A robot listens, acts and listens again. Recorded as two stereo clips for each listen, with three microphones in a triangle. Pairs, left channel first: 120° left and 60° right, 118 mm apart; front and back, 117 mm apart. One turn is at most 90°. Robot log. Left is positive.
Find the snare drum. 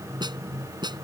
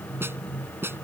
note: The snare drum: 110° right.
cmd yaw -90
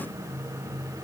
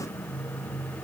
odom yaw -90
note: Nothing new. It was at 20° right.
cmd yaw -20
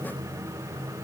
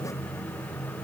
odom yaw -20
cmd idle
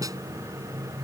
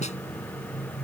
end: Facing where the snare drum came from. I can't hear it now.